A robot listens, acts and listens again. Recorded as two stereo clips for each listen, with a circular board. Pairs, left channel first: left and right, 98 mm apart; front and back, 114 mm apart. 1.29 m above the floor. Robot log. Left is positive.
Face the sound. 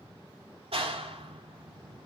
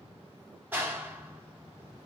note: The clap: 105° right.
cmd yaw -105
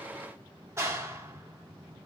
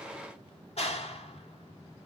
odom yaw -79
note: The clap is now 25° right.
cmd yaw -25
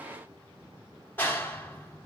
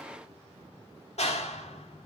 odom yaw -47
note: The clap is now 20° left.
cmd yaw +20
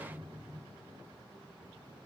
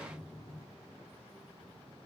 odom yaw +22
end: Found it: a clap, straight ahead.